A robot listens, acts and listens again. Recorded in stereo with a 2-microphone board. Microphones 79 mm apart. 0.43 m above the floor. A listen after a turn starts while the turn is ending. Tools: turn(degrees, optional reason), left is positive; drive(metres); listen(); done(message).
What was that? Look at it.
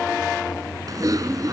turn(degrees=-50, reason="The typing on a keyboard: about 50° right or 130° right.")
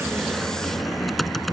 done("Found it: typing on a keyboard, straight ahead.")